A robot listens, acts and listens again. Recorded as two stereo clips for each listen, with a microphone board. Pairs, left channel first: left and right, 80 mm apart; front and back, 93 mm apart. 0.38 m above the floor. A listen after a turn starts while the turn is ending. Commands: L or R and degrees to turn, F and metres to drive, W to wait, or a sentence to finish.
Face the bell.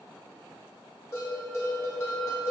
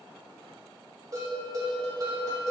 L135
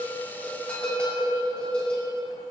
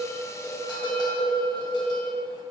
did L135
L15
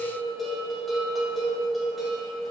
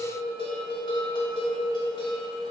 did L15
Found it: a bell, straight ahead, 1 to 2 m away.